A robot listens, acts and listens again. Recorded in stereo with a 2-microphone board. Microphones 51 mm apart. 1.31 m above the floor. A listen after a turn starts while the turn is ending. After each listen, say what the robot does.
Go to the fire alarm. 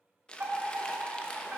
Turn 55° right.
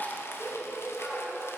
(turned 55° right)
Turn 60° right.
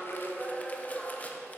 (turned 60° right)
Drive 1.0 m forward.
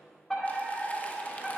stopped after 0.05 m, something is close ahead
Blocked. The fire alarm is further on, straight ahead.